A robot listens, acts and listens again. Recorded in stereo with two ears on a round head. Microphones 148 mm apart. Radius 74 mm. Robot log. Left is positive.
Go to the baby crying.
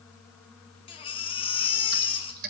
note: The baby crying: about 35° left or 145° left.
cmd yaw +35
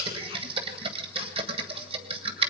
cmd idle
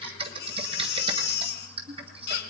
note: So it is at 110° left.
cmd yaw +110
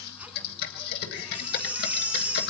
note: The baby crying is now 10° right.
cmd yaw -10
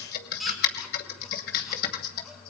cmd fwd 1.0
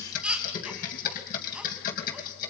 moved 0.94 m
cmd fwd 1.0
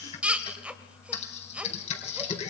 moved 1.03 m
cmd fwd 1.0
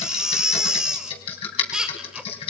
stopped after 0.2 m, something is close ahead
end: I am next to the baby crying.